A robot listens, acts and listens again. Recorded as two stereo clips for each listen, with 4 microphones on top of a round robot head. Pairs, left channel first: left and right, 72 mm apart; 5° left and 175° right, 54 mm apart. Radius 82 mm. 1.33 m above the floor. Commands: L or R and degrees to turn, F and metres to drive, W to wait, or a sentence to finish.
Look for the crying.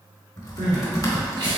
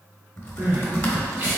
R115
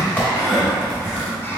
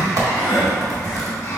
Found it: crying, straight ahead, 1 to 2 m away.